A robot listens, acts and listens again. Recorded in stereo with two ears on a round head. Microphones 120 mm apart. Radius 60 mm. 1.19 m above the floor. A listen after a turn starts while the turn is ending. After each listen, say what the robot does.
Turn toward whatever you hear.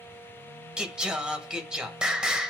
Turn 30° right.
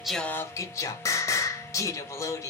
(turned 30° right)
Turn 25° left.
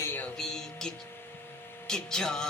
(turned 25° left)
Facing the singing, 1 to 2 m away.